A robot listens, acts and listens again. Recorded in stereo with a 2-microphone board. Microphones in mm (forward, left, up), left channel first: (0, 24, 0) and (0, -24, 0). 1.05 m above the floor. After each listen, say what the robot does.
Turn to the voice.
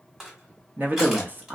Turn 40° right.
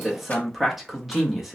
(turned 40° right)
Found it: a man speaking, straight ahead, under 1 m away.